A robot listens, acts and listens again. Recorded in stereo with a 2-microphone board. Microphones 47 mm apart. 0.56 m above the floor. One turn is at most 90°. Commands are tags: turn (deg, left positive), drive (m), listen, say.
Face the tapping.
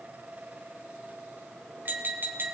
<turn deg="-45"/>
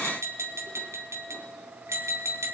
<turn deg="-90"/>
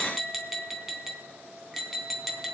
<say>Found it: tapping, straight ahead, 1 to 2 m away.</say>